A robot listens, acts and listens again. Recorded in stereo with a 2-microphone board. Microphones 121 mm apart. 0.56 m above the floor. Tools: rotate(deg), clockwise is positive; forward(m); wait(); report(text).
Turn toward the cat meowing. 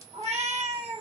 rotate(65)
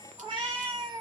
rotate(45)
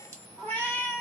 rotate(-15)
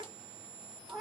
report("Facing the cat meowing, 1 to 2 m away.")